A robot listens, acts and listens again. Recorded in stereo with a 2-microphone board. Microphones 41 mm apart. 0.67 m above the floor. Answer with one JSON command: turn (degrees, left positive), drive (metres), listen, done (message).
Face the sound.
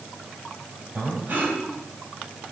{"turn": -55}
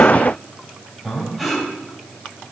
{"done": "Facing the breathing, over 4 m away."}